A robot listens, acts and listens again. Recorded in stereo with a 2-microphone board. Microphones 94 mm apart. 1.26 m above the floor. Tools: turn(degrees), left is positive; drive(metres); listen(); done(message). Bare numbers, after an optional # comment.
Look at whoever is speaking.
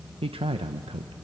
turn(-90)
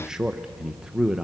done("Found it: a man speaking, straight ahead.")